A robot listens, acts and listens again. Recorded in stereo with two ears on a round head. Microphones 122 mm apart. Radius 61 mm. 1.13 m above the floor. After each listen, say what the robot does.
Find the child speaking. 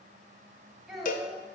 Turn 30° left.
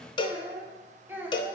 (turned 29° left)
Turn 30° right.
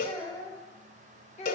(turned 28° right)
Turn 50° left.
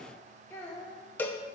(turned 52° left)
Turn 25° left.
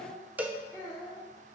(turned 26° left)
Turn 15° left.
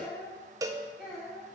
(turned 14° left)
Facing the child speaking.